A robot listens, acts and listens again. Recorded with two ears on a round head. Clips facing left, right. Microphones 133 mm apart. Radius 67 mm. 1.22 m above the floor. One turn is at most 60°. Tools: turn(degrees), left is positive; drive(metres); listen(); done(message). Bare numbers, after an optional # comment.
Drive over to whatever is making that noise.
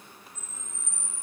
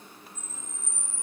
# The camera shutter: about 65° left or 115° left.
turn(60)
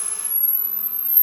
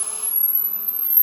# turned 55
# So it is at 10° left.
turn(10)
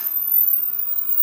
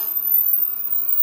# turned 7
drive(1.0)
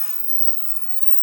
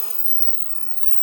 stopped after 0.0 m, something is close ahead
# The camera shutter is now 10° left.
turn(10)
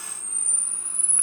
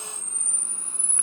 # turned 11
done("Blocked. The camera shutter is further on, straight ahead.")